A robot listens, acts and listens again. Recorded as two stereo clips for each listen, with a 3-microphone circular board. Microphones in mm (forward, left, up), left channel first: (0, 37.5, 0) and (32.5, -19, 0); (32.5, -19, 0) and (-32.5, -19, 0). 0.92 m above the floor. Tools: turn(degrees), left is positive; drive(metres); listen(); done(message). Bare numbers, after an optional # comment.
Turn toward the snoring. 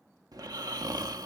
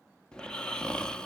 # The snoring: 80° right.
turn(-80)
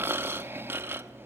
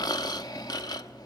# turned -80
done("Found it: snoring, straight ahead.")